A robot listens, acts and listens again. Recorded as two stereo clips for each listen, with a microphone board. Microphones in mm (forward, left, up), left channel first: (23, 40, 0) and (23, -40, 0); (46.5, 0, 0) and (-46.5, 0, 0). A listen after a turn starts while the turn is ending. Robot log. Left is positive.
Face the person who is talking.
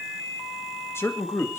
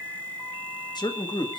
note: The man speaking: 35° left.
cmd yaw +35
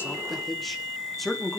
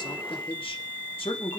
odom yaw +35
end: Found it: a man speaking, straight ahead, 2 to 4 m away.